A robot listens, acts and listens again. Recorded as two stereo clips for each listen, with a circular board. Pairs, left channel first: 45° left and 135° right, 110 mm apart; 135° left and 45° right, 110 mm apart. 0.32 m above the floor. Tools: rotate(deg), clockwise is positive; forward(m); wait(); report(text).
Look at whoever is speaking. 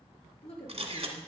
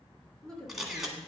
rotate(-55)
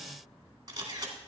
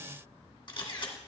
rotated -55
wait()
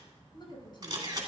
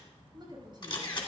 report("Found it: a woman speaking, straight ahead.")